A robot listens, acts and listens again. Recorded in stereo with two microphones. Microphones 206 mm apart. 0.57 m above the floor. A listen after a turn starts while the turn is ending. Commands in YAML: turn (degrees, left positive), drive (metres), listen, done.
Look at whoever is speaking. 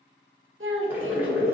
turn: -75
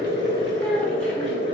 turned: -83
listen: true
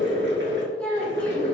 done: "Found it: a child speaking, straight ahead."